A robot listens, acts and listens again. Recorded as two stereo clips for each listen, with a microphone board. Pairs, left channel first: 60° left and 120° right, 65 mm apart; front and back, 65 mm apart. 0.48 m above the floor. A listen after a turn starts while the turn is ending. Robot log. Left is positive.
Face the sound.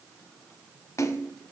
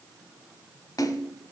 note: The splash: 25° left.
cmd yaw +25
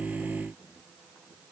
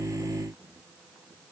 end: I heard a splash from this way, but can't make it out now.